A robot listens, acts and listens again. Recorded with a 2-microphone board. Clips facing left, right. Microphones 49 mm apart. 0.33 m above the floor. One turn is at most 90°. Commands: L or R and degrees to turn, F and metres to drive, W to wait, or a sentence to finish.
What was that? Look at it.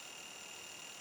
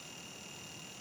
W
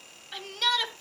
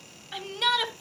R30
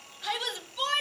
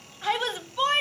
R90
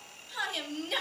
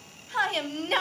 R80
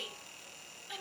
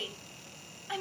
R60
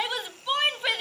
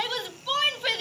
L20
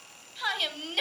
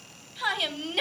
Facing the shout.